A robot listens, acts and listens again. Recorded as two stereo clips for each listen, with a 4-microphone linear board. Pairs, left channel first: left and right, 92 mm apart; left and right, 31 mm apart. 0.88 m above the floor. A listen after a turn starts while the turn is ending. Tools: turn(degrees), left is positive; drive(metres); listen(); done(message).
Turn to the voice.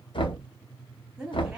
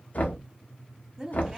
turn(degrees=-30)
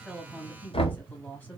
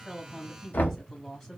turn(degrees=20)
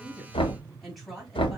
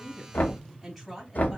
done("Facing the woman speaking.")